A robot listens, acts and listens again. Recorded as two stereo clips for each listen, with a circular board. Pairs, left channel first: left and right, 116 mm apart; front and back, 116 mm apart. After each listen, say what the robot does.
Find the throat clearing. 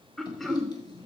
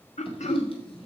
Facing the throat clearing.